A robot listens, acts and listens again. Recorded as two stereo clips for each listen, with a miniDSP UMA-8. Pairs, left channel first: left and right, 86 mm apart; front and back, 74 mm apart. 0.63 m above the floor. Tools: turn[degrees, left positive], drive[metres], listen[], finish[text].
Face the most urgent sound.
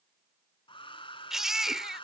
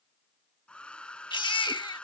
Action: finish[Facing the baby crying.]